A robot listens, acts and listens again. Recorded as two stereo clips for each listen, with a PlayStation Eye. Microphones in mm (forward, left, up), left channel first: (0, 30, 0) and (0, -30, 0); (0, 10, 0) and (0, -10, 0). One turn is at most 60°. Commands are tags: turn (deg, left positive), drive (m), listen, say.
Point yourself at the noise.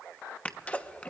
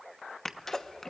<turn deg="20"/>
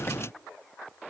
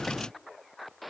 <listen/>
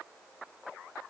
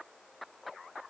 <say>I heard a sneeze, but can't make it out now. It was about straight ahead or 140° left.</say>